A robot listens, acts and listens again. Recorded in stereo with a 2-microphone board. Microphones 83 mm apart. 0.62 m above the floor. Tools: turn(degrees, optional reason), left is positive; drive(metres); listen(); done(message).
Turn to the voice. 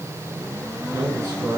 turn(degrees=-30, reason="The man speaking: about 30° right or 150° right.")
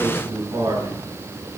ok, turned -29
turn(degrees=-125, reason="So it is at 125° right.")
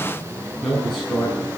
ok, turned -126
done("Found it: a man speaking, straight ahead, over 4 m away.")